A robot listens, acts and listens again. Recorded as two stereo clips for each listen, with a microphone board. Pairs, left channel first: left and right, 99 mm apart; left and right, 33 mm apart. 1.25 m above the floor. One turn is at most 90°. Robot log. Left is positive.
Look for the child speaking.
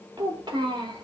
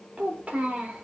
note: The child speaking: about 45° right or 135° right.
cmd yaw -45
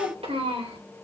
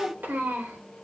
note: So it is at 90° right.
cmd yaw -90
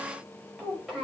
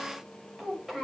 end: Found it: a child speaking, straight ahead, 2 to 4 m away.